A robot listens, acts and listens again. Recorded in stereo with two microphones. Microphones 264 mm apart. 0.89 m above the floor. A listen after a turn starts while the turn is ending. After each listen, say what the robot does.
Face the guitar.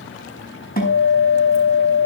Turn 35° left.
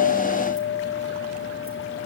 Facing the guitar, over 4 m away.